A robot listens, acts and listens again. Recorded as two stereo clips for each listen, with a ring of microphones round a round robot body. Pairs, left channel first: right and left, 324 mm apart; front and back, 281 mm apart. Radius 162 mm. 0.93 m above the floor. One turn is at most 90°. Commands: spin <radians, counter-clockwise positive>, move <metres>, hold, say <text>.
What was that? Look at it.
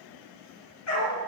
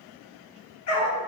spin -0.79
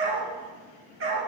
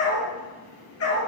spin 0.70
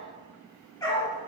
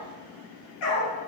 spin -0.17
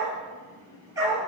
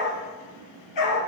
spin 0.17
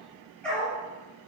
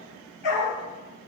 say Found it: a dog barking, straight ahead, over 4 m away.